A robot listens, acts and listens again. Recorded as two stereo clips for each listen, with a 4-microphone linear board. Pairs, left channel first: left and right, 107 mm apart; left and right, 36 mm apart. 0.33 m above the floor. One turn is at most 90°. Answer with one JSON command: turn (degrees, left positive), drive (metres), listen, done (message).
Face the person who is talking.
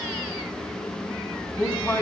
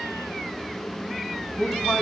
{"turn": 30}
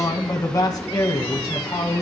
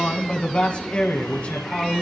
{"turn": 90}
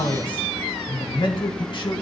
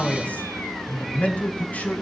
{"turn": 60}
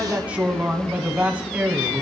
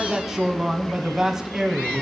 {"turn": -10}
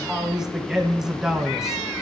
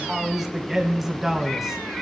{"done": "Facing the man speaking."}